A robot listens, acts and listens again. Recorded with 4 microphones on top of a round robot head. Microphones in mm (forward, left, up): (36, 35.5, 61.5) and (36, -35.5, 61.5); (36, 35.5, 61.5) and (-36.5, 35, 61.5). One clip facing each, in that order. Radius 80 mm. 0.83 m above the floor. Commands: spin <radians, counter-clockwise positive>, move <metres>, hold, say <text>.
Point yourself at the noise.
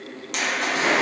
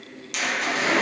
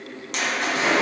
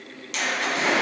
spin 0.79
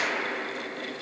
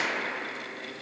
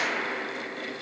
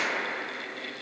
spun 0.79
say I heard a splash from this way, but can't make it out now.